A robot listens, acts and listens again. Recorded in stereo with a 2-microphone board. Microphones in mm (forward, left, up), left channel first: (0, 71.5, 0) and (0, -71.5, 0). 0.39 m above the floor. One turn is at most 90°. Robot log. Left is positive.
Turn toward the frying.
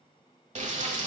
note: The frying: about 55° right or 125° right.
cmd yaw -55
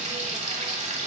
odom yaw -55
note: So it is at 55° right.
cmd yaw -55
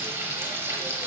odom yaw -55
note: The frying is now 20° right.
cmd yaw -20
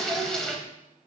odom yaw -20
end: Found it: frying, straight ahead, 1 to 2 m away.